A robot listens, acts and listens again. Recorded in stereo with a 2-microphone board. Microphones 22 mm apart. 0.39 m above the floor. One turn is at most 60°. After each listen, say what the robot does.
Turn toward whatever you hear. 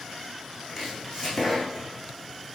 Turn 30° right.
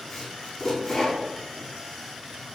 Turn 15° left.
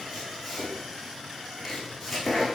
Found it: chopping, straight ahead.